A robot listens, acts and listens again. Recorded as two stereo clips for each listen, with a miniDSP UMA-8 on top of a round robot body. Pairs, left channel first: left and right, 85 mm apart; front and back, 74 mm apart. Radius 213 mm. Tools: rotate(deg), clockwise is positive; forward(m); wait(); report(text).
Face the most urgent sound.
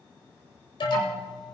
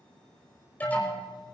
rotate(-70)
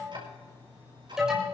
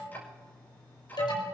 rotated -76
report("Found it: an alarm, straight ahead.")